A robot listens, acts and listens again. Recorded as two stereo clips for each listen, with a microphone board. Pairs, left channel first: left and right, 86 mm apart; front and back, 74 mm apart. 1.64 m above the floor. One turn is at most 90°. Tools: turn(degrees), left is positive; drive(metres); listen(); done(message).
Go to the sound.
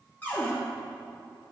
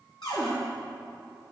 turn(degrees=20)
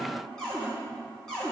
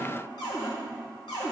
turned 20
turn(degrees=10)
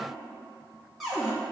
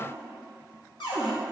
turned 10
drive(metres=1.0)
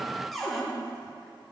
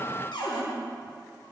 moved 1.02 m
drive(metres=1.0)
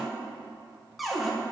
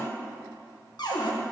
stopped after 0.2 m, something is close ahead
done("Arrived at the cupboard door, straight ahead.")